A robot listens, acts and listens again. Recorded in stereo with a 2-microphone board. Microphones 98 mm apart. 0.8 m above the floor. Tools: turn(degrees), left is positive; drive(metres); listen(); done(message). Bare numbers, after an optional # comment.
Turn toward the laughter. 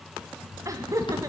# The laughter: about 35° right or 145° right.
turn(-35)
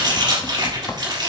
listen()
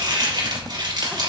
listen()
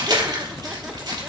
done("I heard laughter, but can't make it out now. It was about straight ahead or 110° right.")